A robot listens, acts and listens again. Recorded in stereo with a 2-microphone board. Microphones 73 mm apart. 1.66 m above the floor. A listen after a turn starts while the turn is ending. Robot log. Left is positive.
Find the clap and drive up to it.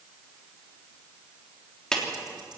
cmd yaw +30
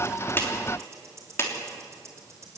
note: So it is at 145° left.
cmd yaw +145
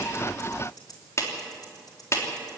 note: The clap is now 40° left.
cmd yaw +40
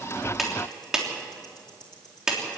note: The clap is now 10° right.
cmd yaw -10
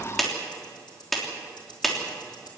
cmd fwd 1.0
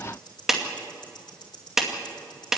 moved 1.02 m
cmd fwd 1.0
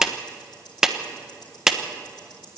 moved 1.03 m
cmd fwd 1.0
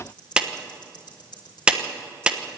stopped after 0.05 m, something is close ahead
note: The clap is now 15° right.
cmd yaw -15
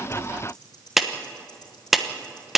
end: I am next to the clap.